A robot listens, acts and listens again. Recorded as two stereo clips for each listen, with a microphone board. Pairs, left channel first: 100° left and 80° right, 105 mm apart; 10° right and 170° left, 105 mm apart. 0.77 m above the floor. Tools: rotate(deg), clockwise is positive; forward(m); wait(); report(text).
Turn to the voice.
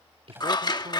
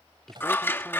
rotate(95)
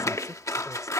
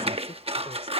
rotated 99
wait()
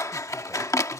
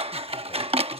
wait()
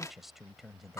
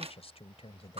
rotate(-10)
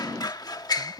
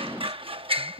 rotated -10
report("Facing the man speaking.")